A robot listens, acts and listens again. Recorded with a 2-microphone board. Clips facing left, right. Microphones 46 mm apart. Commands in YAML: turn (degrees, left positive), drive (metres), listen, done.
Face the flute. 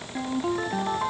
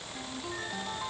listen: true
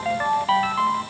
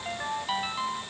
listen: true
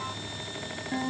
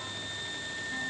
done: "I can't make out a flute to turn to."